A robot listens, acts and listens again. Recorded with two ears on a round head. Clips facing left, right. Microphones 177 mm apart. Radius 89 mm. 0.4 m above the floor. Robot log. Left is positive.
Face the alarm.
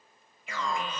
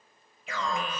note: The alarm: about 60° right or 120° right.
cmd yaw -60
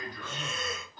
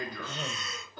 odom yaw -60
note: So it is at 55° right.
cmd yaw -55
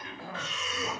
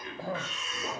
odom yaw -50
end: Facing the alarm.